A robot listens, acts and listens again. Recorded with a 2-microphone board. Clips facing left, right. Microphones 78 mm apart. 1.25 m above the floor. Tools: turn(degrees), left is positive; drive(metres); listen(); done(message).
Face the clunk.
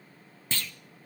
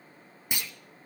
turn(degrees=-30)
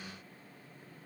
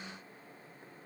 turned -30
listen()
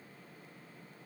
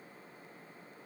done("I heard a clunk, but can't make it out now. It was about 15° left or 135° right.")